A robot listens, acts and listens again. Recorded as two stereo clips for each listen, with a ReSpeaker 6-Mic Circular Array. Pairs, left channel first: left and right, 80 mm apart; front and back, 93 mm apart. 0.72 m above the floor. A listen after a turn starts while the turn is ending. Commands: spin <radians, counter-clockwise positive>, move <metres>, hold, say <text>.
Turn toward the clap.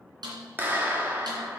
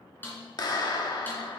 spin -0.52
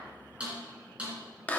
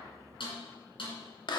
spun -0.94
spin 0.35
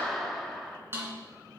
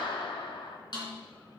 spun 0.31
say Found it: a clap, straight ahead, 1 to 2 m away.